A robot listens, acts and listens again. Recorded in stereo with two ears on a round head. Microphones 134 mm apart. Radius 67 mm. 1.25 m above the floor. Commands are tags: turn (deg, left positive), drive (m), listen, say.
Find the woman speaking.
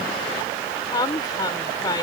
<turn deg="25"/>
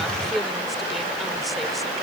<listen/>
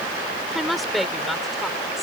<say>Found it: a woman speaking, straight ahead.</say>